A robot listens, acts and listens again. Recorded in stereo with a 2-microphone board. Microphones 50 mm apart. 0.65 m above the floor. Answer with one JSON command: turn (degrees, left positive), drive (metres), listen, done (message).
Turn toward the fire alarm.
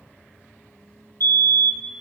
{"turn": 65}
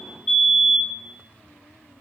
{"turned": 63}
{"turn": 20}
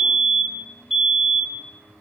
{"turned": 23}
{"done": "Found it: a fire alarm, straight ahead, over 4 m away."}